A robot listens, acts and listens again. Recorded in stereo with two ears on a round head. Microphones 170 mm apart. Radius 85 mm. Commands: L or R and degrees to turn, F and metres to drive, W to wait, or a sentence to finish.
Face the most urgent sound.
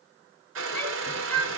L30
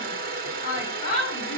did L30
L140
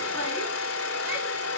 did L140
W
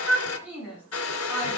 R10
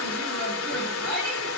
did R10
Facing the shout.